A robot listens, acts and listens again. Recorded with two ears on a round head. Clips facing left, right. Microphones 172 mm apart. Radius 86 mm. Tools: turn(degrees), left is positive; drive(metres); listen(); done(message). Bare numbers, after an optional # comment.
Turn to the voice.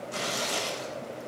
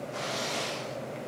listen()
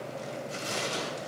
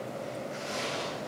listen()
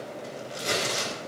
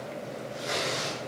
done("I can't make out anyone speaking, only tearing paper.")